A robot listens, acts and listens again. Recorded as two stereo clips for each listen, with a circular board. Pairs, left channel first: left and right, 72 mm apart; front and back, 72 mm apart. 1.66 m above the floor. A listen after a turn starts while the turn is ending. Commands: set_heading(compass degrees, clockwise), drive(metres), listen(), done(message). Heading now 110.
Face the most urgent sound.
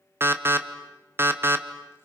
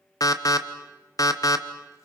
set_heading(145)
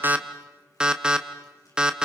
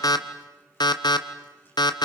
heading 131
set_heading(141)
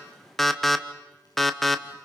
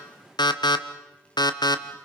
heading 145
done("Facing the alarm.")